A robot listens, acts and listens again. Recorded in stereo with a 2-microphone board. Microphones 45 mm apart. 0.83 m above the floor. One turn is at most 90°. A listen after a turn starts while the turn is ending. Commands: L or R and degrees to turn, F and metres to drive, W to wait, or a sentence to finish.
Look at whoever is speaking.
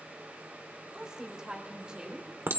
R20
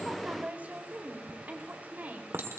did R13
R45
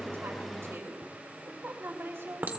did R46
R90
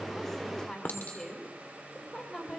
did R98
L15
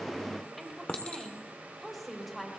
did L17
Facing the woman speaking, over 4 m away.